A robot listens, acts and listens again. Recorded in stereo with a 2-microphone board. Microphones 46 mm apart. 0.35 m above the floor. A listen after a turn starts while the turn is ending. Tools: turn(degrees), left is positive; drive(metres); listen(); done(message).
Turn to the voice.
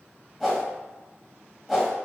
listen()
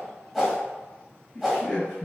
turn(degrees=20)
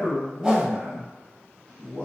done("Found it: a man speaking, straight ahead.")